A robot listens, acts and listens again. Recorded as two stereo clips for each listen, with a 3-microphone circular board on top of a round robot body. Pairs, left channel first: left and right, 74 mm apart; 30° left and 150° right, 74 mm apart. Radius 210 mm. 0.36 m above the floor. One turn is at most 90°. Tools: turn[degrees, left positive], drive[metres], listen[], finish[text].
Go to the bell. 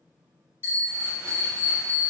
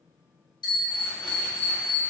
Thought: The bell: 25° left.
Action: turn[25]
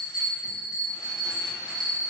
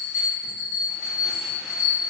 Action: drive[1.0]
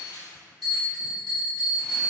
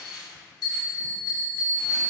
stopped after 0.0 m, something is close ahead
Thought: The bell is now 10° right.
Action: turn[-10]
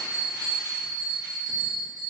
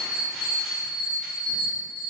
Action: finish[Blocked. The bell is further on, straight ahead.]